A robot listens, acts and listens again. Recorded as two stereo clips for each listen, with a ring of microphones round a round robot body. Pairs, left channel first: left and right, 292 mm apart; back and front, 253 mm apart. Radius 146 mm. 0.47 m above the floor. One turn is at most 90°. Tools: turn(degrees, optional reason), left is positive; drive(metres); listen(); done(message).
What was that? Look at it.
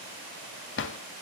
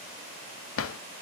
turn(degrees=90, reason="The drawer: 145° left.")
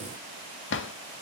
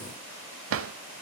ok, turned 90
turn(degrees=40, reason="The drawer is now 40° left.")
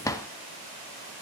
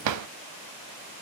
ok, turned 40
turn(degrees=10, reason="The drawer is now 10° left.")
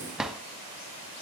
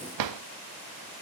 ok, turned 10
done("Facing the drawer.")